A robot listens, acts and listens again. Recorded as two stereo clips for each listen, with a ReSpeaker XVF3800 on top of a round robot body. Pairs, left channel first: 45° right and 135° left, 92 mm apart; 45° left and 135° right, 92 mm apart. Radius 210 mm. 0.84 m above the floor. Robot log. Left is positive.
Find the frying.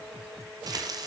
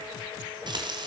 note: The frying: 175° right.
cmd yaw -175
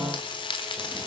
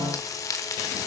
note: The frying is now 10° right.
cmd yaw -10
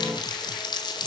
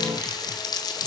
end: Facing the frying.